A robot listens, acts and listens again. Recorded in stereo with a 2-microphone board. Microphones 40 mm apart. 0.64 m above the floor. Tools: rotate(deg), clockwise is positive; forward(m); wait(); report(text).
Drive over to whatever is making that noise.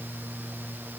wait()
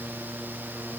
wait()
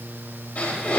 rotate(-40)
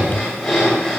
forward(1.0)
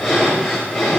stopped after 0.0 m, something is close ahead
report("Something is in my way. I am facing the breathing but have not reached it.")